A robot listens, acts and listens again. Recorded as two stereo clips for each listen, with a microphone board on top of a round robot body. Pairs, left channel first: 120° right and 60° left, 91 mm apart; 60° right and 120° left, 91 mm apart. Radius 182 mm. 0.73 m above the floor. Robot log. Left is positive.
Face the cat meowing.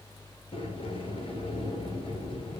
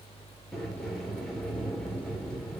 cmd idle
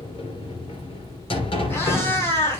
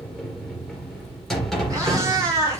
note: The cat meowing: 175° left.
cmd yaw +175
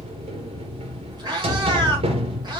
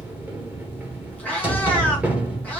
note: The cat meowing is now 15° left.
cmd yaw +15
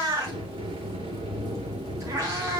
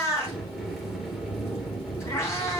end: Facing the cat meowing.